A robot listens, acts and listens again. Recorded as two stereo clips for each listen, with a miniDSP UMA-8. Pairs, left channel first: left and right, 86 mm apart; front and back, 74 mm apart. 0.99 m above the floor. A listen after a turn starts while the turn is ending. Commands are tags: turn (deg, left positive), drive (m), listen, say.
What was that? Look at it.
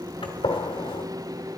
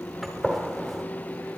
<turn deg="90"/>
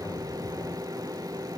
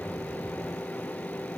<say>Facing where the gunshot came from. I can't hear it now.</say>